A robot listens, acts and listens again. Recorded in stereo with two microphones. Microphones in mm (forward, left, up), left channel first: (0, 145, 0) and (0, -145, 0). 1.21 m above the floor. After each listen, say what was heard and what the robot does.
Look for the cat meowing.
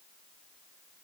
Keep listening.
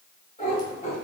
The cat meowing: about 25° left or 155° left. Turn 25° left.
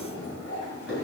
The cat meowing: about 40° left or 140° left. Turn 40° left.
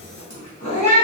So it is at 110° left. Turn 110° left.
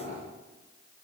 Keep listening.
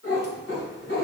The cat meowing is now 45° left. Turn 45° left.
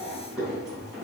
Facing the cat meowing.